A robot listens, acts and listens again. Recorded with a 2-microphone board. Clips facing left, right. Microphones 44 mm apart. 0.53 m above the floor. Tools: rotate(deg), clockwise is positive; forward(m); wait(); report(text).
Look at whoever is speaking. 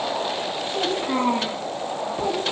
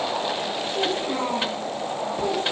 rotate(-40)
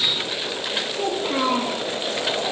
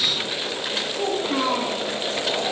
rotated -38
report("Found it: a child speaking, straight ahead, 2 to 4 m away.")